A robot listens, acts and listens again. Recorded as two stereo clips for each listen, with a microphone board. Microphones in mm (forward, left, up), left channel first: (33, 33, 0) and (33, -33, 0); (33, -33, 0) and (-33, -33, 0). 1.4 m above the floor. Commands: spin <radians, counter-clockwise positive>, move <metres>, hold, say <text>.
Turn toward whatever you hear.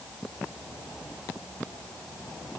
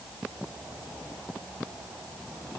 hold
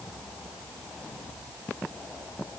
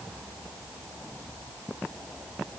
hold
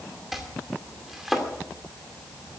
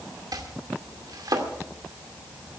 spin -3.05
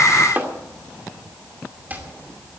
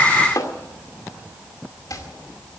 spin -0.44
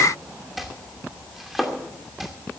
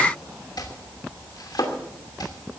say Facing the chopping, 2 to 4 m away.